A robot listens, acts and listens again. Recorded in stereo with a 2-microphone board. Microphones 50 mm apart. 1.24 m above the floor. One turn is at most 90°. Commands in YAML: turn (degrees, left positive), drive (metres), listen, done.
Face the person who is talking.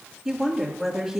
turn: -30
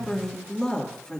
turn: 25
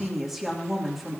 done: "Found it: a woman speaking, straight ahead."